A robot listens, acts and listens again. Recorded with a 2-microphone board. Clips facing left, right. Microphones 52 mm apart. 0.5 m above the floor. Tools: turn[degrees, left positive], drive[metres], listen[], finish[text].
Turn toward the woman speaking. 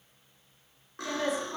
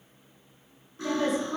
Thought: The woman speaking: about 60° right or 120° right.
Action: turn[-60]
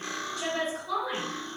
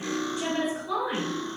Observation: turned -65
Thought: So it is at 20° right.
Action: turn[-20]
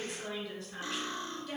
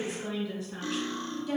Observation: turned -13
Action: finish[Found it: a woman speaking, straight ahead.]